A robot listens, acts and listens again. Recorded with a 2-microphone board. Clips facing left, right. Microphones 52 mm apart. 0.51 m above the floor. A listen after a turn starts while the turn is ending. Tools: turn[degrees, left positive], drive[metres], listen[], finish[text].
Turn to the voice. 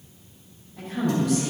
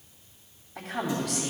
Thought: The woman speaking: about 75° right or 105° right.
Action: turn[-75]
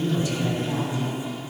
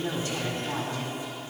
Thought: So it is at 10° right.
Action: turn[-10]
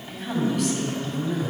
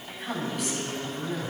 Action: finish[Facing the woman speaking, 2 to 4 m away.]